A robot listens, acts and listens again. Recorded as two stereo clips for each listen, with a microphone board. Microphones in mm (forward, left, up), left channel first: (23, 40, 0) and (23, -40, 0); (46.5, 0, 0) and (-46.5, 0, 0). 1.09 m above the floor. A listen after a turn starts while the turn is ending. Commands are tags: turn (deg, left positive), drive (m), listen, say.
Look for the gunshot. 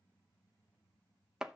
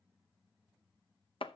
<listen/>
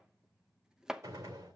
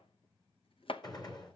<turn deg="-40"/>
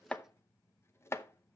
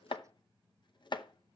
<say>I heard a gunshot from this way, but can't make it out now.</say>